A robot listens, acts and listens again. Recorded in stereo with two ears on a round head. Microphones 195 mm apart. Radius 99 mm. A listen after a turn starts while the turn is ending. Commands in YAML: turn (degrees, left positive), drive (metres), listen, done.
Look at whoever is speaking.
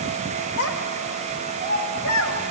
turn: 90
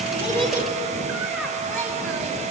listen: true
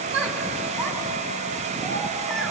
done: "Found it: a child speaking, straight ahead."